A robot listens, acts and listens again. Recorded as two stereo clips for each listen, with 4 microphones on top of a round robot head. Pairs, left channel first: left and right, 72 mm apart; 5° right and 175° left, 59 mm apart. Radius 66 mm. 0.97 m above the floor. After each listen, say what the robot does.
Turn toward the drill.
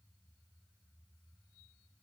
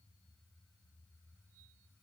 Keep listening.
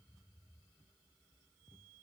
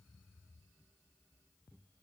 Keep listening.
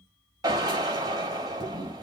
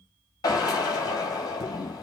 Turn 45° right.
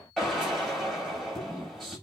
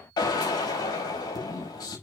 Found it: a drill, straight ahead, over 4 m away.